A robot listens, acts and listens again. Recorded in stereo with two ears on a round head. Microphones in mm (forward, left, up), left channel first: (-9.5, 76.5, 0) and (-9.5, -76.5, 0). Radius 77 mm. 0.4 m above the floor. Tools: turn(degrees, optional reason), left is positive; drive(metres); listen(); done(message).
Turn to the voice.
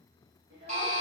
turn(degrees=-60, reason="The child speaking: about 60° right or 120° right.")
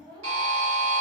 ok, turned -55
turn(degrees=-30, reason="So it is at 30° right.")
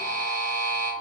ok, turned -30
listen()
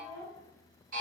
done("Facing the child speaking, under 1 m away.")